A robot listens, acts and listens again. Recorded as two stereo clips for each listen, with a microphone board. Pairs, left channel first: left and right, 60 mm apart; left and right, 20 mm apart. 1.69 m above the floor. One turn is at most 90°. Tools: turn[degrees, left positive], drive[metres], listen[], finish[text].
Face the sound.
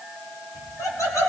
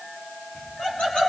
Thought: The laughter: about 75° left or 105° left.
Action: turn[75]
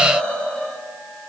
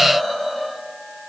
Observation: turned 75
Thought: So it is at 20° left.
Action: turn[20]
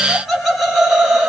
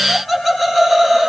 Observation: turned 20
Thought: The laughter is now 10° right.
Action: turn[-10]
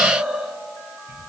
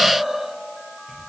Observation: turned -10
Thought: The laughter is now 15° right.
Action: turn[-15]
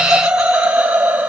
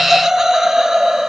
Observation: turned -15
Thought: The laughter is now 20° right.
Action: turn[-20]
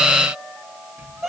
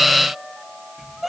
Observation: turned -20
Action: finish[Found it: laughter, straight ahead, 2 to 4 m away.]